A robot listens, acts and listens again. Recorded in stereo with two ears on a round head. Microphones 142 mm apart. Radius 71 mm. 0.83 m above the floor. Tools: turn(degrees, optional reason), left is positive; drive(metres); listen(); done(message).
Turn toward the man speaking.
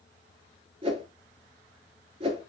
listen()
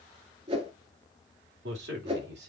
turn(degrees=-90)
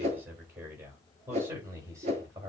turn(degrees=-15, reason="So it is at 15° right.")
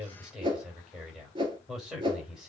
done("Facing the man speaking.")